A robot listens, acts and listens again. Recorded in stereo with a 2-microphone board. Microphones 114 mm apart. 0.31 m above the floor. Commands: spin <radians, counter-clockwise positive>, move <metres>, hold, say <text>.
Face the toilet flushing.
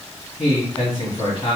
hold
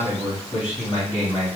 hold
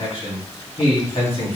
say I can't make out a toilet flushing to turn to.